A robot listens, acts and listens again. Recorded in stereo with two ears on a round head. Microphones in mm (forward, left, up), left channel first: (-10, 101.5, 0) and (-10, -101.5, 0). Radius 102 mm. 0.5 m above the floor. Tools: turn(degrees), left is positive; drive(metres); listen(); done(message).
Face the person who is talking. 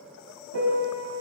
listen()
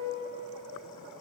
listen()
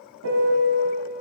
done("I can't make out anyone speaking, only a piano.")